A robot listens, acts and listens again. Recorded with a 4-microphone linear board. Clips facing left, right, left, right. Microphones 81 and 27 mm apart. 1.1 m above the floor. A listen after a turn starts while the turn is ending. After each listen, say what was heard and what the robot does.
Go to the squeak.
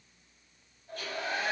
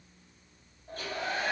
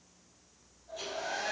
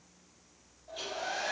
Keep listening.
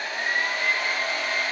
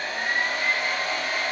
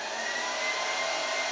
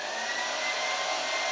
Keep listening.
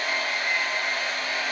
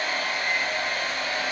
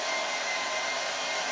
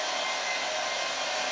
I can't make out a squeak to turn to.